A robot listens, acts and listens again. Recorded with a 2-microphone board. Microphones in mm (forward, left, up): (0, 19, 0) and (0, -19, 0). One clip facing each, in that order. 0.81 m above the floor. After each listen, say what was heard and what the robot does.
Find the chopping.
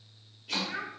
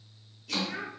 The chopping: about 25° left or 155° left. Turn 25° left.
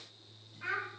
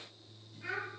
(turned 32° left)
Keep listening.
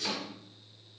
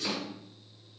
Found it: chopping, straight ahead, 1 to 2 m away.